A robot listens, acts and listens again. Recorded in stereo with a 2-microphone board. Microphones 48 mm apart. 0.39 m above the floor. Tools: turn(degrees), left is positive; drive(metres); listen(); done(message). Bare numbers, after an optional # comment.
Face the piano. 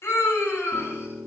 turn(-90)
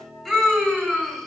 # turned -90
done("Facing the piano, 2 to 4 m away.")